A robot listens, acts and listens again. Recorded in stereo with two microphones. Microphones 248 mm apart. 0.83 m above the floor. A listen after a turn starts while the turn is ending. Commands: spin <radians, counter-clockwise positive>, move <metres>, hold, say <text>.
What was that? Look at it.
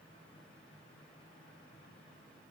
hold
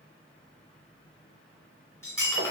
spin 0.52
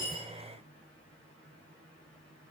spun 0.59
hold
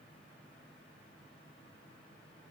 say I heard breaking glass, but can't make it out now. It was about 25° right or 135° left.